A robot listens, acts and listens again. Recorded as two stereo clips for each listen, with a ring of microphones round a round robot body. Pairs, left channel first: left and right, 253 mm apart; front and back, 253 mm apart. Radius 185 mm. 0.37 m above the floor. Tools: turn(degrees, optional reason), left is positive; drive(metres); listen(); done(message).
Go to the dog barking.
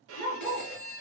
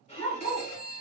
turn(degrees=15, reason="The dog barking: 15° left.")
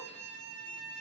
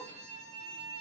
listen()
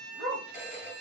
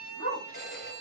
drive(metres=1.0)
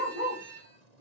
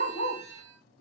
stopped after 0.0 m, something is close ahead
turn(degrees=-10, reason="The dog barking is now 10° right.")
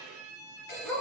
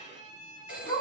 done("Something is in my way. I am facing the dog barking but have not reached it.")